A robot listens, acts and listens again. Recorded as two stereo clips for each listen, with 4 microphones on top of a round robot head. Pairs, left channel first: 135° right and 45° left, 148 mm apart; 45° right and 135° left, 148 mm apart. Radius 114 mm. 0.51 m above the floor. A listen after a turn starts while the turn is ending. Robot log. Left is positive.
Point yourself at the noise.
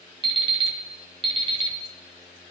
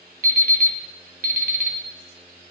note: The alarm clock: 105° left.
cmd yaw +105
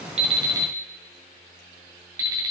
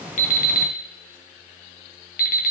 note: The alarm clock is now 25° right.
cmd yaw -25
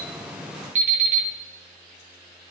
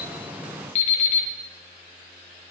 end: Facing the alarm clock, 2 to 4 m away.